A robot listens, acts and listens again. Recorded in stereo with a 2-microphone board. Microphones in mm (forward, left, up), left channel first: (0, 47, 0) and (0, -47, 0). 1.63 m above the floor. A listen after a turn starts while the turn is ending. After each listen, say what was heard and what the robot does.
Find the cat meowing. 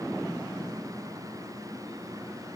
Keep listening.
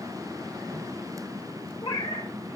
Turn 90° left.
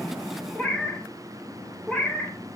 So it is at 10° left. Turn 10° left.
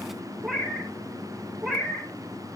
Facing the cat meowing, 2 to 4 m away.